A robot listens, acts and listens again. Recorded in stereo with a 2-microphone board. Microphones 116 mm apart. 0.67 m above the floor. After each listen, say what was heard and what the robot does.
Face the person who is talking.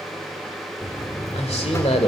The man speaking: about 60° left or 120° left. Turn 60° left.
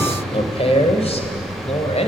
So it is at 65° left. Turn 65° left.
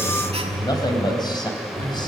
The man speaking is now 40° left. Turn 40° left.
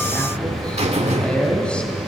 The man speaking is now 10° left. Turn 10° left.
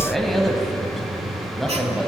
Facing the man speaking, over 4 m away.